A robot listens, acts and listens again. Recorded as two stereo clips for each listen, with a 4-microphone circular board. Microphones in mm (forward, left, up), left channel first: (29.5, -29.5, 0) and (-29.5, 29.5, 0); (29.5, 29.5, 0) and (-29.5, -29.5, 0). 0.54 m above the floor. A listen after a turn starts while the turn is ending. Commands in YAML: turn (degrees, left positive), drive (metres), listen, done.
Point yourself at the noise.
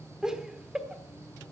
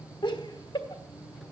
turn: 55
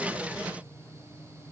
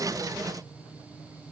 listen: true
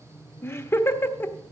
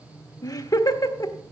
turn: 15
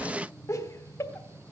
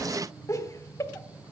done: "Found it: laughter, straight ahead, 1 to 2 m away."